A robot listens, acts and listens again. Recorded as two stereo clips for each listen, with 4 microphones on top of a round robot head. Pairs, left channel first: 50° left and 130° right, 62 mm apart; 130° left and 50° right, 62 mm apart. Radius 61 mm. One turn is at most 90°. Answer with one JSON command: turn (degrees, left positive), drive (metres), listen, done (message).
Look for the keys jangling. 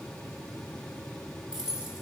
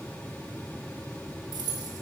{"turn": -55}
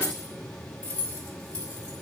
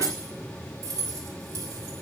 {"turn": -20}
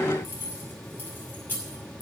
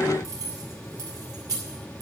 {"turn": -15}
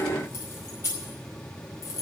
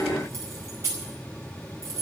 {"done": "Found it: keys jangling, straight ahead."}